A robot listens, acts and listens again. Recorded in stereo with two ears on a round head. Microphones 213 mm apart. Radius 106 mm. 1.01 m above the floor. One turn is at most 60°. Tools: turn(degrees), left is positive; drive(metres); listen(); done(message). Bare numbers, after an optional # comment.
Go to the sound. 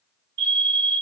# The fire alarm: about 50° right or 130° right.
turn(-50)
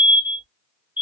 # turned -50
# So it is at 10° right.
turn(-10)
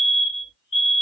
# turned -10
drive(1.0)
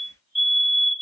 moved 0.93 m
drive(1.0)
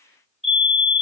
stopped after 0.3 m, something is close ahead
done("I am next to the fire alarm.")